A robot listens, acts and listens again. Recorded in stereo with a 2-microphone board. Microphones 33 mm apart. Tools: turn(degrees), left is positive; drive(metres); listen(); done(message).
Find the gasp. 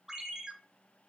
listen()
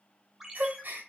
turn(degrees=-90)
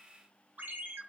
done("I heard a gasp from this way, but can't make it out now.")